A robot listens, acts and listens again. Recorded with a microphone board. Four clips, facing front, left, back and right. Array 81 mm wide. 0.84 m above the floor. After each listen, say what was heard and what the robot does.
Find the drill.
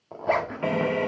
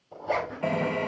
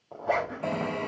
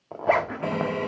Found it: a drill, straight ahead, 2 to 4 m away.